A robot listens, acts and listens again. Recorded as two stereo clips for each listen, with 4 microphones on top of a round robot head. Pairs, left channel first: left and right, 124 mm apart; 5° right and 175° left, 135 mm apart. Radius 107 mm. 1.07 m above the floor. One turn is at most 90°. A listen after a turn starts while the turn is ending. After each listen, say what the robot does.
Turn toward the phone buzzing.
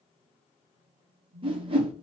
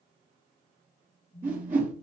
Turn 90° right.
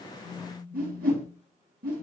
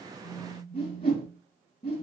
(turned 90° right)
Turn 25° right.
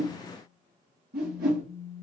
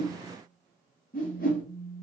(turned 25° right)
Turn 10° right.
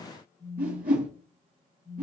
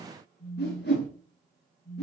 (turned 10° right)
Facing the phone buzzing.